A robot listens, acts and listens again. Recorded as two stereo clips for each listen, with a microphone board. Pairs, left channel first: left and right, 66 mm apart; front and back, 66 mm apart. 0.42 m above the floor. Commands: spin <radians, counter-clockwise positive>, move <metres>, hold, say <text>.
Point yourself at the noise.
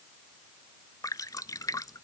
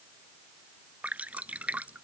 spin 2.01
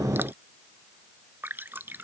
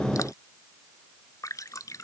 spin -0.52
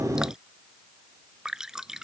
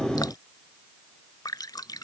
spin -0.17
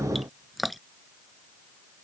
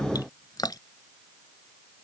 say Found it: dripping, straight ahead.